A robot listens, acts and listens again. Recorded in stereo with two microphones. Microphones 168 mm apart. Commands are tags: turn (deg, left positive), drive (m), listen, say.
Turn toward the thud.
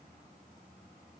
<listen/>
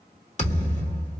<turn deg="45"/>
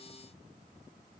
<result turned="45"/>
<listen/>
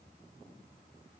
<say>I heard a thud, but can't make it out now. It was about straight ahead or 90° left.</say>